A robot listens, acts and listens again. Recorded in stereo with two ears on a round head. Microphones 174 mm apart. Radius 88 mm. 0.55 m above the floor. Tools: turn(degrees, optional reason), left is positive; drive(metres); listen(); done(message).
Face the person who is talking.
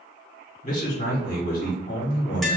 turn(degrees=45, reason="The man speaking: about 45° left or 135° left.")
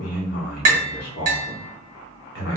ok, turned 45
turn(degrees=80, reason="So it is at 80° left.")
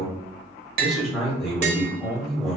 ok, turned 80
done("Facing the man speaking, 1 to 2 m away.")